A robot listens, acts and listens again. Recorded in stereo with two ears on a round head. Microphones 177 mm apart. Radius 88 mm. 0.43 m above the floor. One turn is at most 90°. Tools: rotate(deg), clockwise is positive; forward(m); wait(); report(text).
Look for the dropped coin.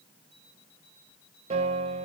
wait()
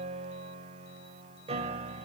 wait()
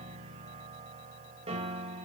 report("I can't make out a dropped coin, only a piano.")